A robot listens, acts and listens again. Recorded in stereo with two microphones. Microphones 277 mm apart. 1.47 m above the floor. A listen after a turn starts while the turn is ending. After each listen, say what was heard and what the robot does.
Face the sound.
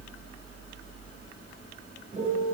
The piano: about 30° right or 150° right. Turn 30° right.
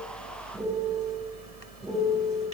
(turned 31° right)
Found it: a piano, straight ahead, over 4 m away.